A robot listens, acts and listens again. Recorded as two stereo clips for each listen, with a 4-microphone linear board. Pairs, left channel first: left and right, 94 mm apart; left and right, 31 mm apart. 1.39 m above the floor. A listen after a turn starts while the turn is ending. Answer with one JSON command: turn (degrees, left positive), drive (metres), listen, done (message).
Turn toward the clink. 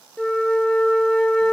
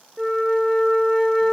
{"listen": true}
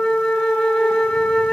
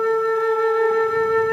{"listen": true}
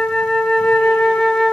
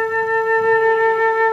{"done": "I can't make out a clink to turn to."}